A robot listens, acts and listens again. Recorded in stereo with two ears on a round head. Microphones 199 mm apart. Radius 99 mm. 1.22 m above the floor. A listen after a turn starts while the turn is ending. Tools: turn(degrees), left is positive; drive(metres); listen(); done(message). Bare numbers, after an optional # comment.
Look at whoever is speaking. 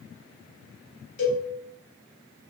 listen()
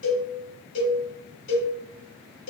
listen()
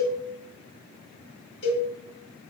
done("I can't make out anyone speaking to turn to.")